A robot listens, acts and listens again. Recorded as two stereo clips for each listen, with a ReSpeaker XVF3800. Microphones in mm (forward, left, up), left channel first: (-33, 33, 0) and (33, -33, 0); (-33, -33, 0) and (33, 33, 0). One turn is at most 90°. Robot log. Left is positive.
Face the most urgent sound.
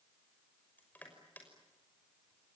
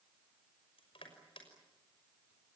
cmd idle
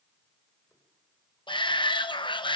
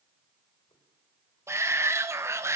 note: The shout: 105° left.
cmd yaw +90
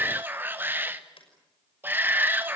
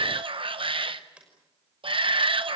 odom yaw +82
note: The shout is now 25° left.
cmd yaw +25
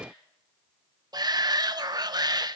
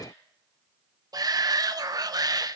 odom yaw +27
end: Found it: a shout, straight ahead.